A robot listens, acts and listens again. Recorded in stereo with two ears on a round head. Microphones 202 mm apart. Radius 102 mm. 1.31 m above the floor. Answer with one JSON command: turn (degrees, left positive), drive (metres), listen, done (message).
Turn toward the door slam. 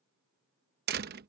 {"turn": -45}
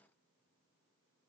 {"listen": true}
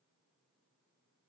{"done": "I heard a door slam, but can't make it out now. It was about straight ahead or 90° right."}